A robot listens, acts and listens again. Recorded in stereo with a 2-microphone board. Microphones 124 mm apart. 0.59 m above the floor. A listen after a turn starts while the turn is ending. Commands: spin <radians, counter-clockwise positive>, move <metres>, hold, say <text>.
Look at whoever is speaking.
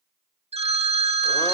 hold
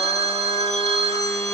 hold
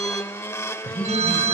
spin 0.52
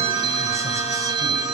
hold
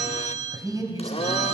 spin -0.52
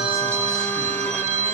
hold
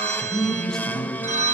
say Found it: a man speaking, straight ahead.